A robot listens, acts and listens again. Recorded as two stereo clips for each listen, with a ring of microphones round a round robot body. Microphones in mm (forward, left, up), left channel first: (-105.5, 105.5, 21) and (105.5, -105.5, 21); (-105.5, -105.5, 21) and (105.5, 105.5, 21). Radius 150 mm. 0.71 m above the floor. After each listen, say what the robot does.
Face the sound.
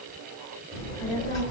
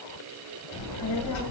Turn 175° left.
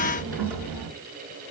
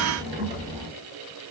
Turn 30° right.
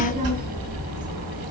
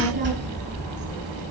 Turn 15° right.
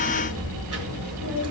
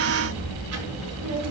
Facing the child speaking, over 4 m away.